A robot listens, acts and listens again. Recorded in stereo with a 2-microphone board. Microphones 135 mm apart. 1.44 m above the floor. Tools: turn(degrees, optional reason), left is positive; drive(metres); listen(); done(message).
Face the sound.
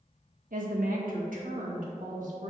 turn(degrees=-65, reason="The woman speaking: about 65° right or 115° right.")
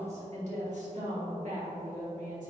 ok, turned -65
turn(degrees=-70, reason="So it is at 70° right.")
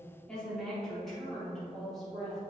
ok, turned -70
done("Facing the woman speaking.")